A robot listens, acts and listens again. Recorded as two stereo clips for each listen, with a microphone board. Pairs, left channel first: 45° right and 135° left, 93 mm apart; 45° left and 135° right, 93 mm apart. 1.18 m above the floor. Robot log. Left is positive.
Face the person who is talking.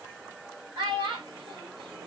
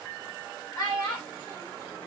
note: The child speaking: 95° left.
cmd yaw +95
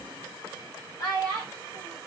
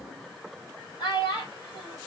end: Facing the child speaking, 2 to 4 m away.